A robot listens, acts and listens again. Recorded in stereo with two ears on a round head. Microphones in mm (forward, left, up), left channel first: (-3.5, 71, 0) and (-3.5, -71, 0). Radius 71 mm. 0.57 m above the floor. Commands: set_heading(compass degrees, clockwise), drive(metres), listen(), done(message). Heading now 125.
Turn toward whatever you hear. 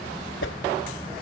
set_heading(35)
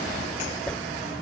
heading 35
done("Found it: a whoosh, straight ahead.")